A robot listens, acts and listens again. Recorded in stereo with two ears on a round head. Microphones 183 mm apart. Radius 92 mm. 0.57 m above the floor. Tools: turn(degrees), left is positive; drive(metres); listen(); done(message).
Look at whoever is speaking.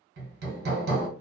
listen()
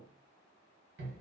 listen()
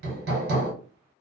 done("I can't make out anyone speaking, only hammering.")